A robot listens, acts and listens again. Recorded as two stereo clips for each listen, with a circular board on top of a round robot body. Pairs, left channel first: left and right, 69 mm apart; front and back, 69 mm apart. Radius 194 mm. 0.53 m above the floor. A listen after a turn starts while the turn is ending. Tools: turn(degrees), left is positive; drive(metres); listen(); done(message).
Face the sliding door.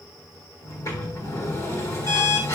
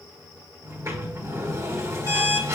turn(degrees=135)
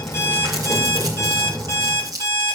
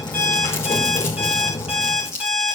turn(degrees=-15)
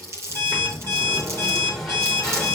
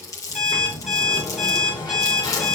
done("Found it: a sliding door, straight ahead.")